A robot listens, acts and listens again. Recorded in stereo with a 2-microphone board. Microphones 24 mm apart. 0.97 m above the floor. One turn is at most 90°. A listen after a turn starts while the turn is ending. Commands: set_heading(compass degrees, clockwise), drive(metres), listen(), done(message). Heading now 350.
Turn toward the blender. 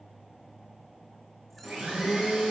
set_heading(80)
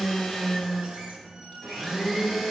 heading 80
done("Facing the blender, 2 to 4 m away.")